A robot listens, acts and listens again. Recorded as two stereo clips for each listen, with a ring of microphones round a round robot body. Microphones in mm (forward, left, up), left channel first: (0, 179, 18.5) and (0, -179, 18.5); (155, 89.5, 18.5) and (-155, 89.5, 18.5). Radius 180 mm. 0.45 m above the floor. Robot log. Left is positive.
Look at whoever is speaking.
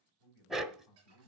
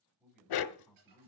note: The man speaking: 90° left.
cmd yaw +90
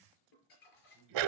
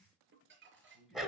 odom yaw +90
end: Found it: a man speaking, straight ahead.